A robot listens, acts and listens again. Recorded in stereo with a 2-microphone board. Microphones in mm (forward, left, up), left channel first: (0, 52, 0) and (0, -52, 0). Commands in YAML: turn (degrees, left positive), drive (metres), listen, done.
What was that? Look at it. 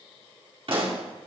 turn: -65
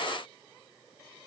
listen: true
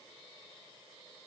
done: "I heard a pop, but can't make it out now. It was about straight ahead or 50° right."